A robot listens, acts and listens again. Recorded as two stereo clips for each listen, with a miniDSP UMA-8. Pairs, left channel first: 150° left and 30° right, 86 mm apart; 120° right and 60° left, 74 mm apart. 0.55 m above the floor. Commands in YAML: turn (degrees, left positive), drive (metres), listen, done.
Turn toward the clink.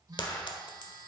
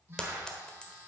turn: 165
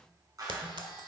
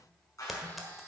turn: -25
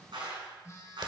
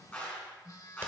listen: true
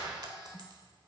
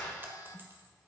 listen: true
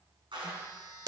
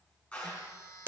done: "Found it: a clink, straight ahead, 1 to 2 m away."